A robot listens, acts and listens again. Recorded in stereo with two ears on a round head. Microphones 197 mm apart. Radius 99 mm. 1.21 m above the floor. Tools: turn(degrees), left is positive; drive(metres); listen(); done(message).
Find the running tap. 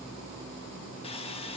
listen()
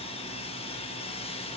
listen()
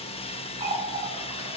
turn(degrees=-25)
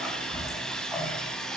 done("Facing the running tap, over 4 m away.")